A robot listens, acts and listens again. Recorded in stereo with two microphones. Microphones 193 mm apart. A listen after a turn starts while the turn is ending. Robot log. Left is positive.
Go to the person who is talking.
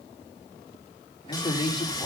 note: The man speaking: about 25° left or 155° left.
cmd yaw +25
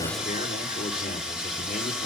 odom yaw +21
note: So it is at 130° left.
cmd yaw +130
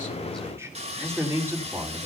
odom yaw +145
note: The man speaking is now 15° right.
cmd yaw -15
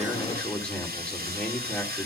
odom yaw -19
cmd fwd 1.0
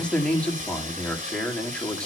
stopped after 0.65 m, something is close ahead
end: Blocked. The man speaking is further on, straight ahead.